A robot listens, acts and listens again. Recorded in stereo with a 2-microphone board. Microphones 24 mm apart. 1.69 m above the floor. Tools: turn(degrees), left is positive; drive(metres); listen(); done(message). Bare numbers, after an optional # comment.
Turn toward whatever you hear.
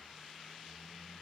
listen()
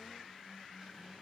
listen()
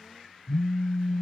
# The phone buzzing: about 50° left or 130° left.
turn(50)
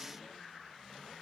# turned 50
listen()
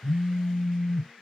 # So it is at 15° left.
turn(15)
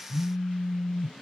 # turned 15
done("Facing the phone buzzing.")